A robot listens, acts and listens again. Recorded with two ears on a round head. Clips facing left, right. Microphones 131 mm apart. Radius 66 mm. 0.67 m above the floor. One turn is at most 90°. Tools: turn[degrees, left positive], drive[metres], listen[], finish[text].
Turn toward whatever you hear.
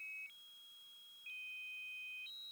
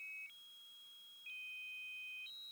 Action: listen[]
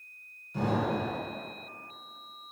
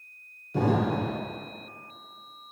Thought: The explosion: about 50° right or 130° right.
Action: turn[-50]
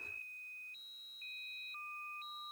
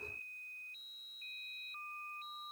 Action: listen[]
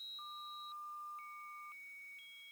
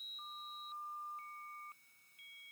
Action: finish[I heard an explosion, but can't make it out now. It was about straight ahead or 80° right.]